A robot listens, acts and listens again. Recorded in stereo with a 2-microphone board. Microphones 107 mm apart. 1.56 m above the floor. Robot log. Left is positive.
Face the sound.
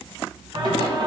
note: The singing: about 50° right or 130° right.
cmd yaw -50
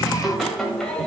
end: Facing the singing, 2 to 4 m away.